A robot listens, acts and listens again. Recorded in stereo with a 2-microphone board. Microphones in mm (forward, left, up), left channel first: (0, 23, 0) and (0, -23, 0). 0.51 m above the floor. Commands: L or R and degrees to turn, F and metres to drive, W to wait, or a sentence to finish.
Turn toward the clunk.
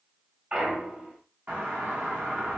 R30
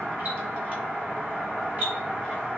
W
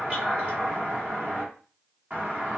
I heard a clunk, but can't make it out now. It was about straight ahead or 120° right.